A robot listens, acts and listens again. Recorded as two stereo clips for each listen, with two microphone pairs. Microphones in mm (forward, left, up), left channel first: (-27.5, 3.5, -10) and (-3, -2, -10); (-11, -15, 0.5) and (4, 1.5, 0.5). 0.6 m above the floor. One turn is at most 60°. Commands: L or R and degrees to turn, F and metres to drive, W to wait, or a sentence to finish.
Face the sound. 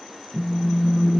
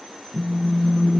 R40
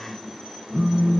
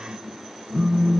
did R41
Found it: a phone buzzing, straight ahead, under 1 m away.